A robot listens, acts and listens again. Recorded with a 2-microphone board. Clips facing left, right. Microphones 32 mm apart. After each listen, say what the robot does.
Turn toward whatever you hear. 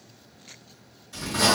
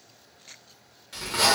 Turn 70° right.
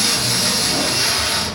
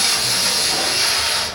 Turn 35° right.
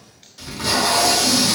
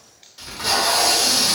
Turn 10° right.
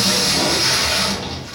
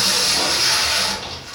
Facing the tape being pulled.